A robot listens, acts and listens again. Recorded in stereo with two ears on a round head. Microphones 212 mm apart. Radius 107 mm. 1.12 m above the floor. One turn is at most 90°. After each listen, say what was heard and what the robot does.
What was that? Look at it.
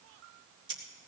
The scissors: about 20° right or 160° right. Turn 20° right.
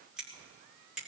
Facing the scissors.